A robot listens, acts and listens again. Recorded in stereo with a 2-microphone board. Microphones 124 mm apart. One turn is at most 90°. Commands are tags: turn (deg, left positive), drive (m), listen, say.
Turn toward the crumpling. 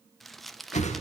<turn deg="30"/>
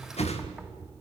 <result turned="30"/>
<listen/>
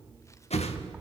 <listen/>
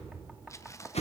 <turn deg="90"/>
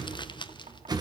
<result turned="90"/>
<turn deg="50"/>
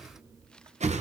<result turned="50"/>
<listen/>
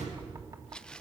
<turn deg="10"/>
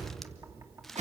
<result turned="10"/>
<say>Facing the crumpling, under 1 m away.</say>